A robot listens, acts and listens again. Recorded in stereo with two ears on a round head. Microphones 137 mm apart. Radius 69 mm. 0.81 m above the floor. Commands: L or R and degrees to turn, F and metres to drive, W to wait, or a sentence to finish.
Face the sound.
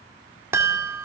R15
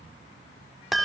Found it: a chime, straight ahead, 2 to 4 m away.